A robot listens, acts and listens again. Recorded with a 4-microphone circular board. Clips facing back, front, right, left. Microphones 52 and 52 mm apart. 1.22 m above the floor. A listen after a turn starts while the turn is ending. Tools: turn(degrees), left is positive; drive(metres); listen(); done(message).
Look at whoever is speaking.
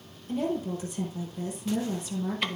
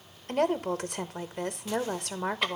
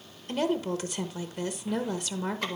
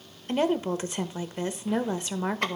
turn(degrees=25)
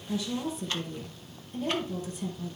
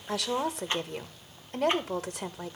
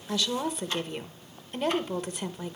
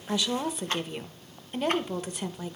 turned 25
done("Facing the woman speaking.")